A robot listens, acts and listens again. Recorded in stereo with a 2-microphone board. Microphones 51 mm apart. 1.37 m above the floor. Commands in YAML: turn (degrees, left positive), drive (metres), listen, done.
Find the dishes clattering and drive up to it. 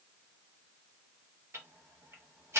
listen: true
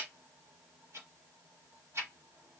listen: true
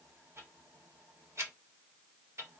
done: "I can't make out dishes clattering to turn to."